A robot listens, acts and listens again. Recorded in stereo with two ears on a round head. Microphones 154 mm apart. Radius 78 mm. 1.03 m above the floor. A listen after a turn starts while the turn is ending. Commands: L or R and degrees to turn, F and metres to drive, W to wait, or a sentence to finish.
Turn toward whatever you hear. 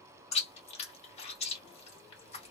L40
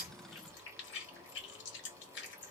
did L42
L100
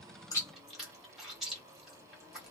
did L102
Facing the chewing.